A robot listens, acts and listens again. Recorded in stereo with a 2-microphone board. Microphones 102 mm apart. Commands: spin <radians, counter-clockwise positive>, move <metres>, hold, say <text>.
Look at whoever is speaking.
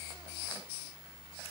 hold
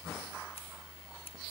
hold
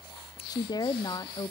spin 0.70
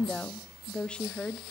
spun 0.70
spin 0.17
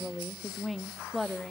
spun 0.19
say Found it: a woman speaking, straight ahead, under 1 m away.